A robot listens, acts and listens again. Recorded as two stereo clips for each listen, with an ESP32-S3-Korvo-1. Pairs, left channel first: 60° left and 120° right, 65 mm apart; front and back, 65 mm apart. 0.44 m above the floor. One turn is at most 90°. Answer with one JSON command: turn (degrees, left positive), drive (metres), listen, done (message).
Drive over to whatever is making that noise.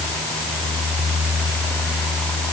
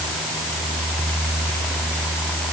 {"listen": true}
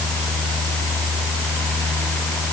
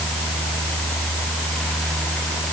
{"listen": true}
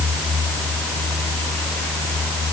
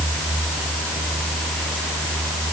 {"done": "I can't make out anything to turn to."}